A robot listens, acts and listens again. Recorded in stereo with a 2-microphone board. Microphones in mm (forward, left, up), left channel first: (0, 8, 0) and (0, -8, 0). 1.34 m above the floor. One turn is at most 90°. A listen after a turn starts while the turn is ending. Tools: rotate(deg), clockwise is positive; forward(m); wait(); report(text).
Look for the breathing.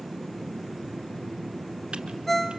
wait()
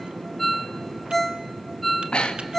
rotate(-90)
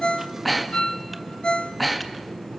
report("Facing the breathing.")